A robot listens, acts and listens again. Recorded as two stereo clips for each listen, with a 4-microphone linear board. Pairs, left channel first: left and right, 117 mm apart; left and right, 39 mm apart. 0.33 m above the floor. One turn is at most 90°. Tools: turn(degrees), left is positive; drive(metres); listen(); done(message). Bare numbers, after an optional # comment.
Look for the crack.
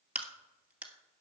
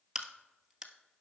turn(-30)
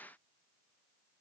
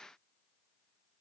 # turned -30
listen()
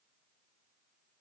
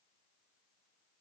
done("I heard a crack, but can't make it out now. It was about 20° left or 140° right.")